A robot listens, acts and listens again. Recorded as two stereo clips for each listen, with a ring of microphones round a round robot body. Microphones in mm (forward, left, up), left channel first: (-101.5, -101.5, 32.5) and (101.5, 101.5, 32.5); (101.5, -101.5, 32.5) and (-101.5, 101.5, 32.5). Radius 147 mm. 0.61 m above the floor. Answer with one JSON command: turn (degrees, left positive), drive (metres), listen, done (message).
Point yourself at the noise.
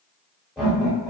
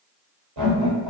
{"turn": 135}
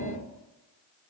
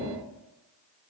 {"turn": 55}
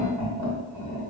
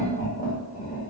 {"turn": 20}
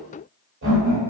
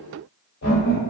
{"done": "Found it: laughter, straight ahead, 1 to 2 m away."}